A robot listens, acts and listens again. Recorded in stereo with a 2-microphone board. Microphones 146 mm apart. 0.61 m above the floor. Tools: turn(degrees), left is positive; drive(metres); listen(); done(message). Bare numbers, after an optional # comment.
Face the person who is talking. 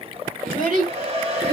# The child speaking: about 70° right or 110° right.
turn(-70)
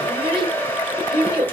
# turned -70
# So it is at 35° right.
turn(-35)
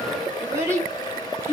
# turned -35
# The child speaking is now 20° right.
turn(-20)
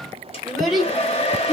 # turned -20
done("Facing the child speaking.")